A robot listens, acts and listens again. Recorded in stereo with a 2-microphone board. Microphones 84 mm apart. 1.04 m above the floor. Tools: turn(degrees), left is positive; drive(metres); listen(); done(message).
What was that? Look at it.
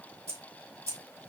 turn(degrees=-35)
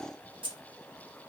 turn(degrees=-95)
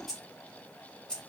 turn(degrees=10)
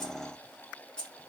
turn(degrees=10)
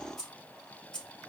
turn(degrees=10)
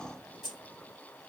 done("Found it: keys jangling, straight ahead.")